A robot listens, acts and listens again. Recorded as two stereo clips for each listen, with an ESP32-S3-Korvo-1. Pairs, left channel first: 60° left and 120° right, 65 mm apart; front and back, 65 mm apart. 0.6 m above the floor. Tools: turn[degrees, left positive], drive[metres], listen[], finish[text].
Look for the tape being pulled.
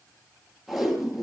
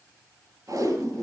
Thought: The tape being pulled: 155° left.
Action: turn[155]
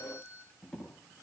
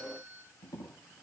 Thought: The tape being pulled is now 15° right.
Action: turn[-15]
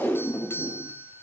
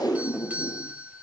Action: finish[Facing the tape being pulled.]